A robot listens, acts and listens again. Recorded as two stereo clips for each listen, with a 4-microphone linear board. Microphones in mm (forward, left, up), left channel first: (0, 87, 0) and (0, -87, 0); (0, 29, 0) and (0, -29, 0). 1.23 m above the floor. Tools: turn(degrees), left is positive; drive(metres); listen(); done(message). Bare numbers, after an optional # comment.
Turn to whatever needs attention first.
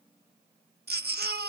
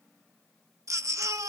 # The baby crying: about 65° right or 115° right.
turn(-65)
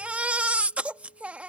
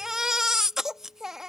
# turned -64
# So it is at 10° right.
turn(-10)
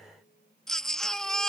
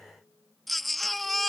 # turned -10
done("Found it: a baby crying, straight ahead.")